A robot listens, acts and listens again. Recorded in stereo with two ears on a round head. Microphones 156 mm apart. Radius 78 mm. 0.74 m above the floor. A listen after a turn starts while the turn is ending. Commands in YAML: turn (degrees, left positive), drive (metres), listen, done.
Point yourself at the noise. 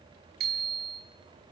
turn: -60
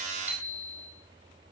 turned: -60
done: "Found it: a bicycle bell, straight ahead, over 4 m away."